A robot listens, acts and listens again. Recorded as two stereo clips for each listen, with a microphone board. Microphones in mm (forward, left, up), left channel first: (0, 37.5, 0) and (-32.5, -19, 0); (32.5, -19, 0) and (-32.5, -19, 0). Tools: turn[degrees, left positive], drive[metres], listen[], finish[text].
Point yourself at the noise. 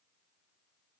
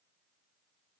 Action: listen[]
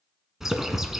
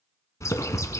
Thought: The bird: 35° right.
Action: turn[-35]
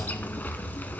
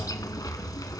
Action: finish[Found it: a bird, straight ahead.]